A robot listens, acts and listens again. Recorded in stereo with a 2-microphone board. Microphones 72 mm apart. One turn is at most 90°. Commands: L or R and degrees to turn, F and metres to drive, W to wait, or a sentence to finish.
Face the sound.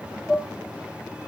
R30
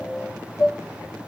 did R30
L25
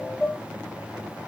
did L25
Found it: dishes clattering, straight ahead, 2 to 4 m away.